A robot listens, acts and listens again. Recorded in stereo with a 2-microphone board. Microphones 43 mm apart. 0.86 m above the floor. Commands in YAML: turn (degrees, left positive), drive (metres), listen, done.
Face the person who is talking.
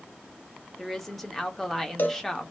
turn: 30
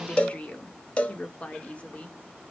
turn: 145
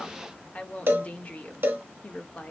turn: 45
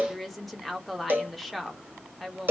done: "Facing the woman speaking, under 1 m away."